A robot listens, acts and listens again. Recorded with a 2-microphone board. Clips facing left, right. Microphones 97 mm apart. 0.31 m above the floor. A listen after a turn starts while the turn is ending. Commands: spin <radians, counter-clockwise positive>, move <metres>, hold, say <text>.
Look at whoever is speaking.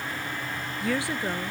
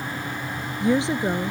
spin -0.35
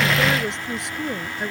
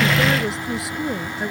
say Facing the woman speaking.